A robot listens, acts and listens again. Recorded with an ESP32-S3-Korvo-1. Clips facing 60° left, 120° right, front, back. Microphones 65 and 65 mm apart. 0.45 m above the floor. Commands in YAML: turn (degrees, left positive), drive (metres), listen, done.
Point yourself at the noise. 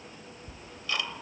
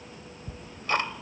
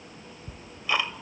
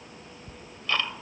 turn: -80
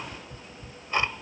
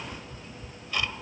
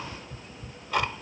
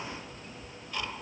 done: "Facing the ticking."